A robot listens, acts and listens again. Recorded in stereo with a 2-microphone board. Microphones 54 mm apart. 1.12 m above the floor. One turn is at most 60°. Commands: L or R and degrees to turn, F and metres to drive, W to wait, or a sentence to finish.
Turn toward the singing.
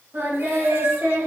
R50
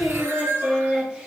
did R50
Facing the singing, 2 to 4 m away.